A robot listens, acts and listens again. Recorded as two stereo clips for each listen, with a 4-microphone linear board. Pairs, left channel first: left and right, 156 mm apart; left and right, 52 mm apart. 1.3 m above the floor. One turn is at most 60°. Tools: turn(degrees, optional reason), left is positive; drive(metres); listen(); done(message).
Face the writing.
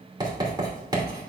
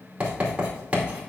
turn(degrees=-25, reason="The writing: about 25° right or 155° right.")
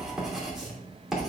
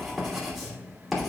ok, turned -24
done("Facing the writing, 2 to 4 m away.")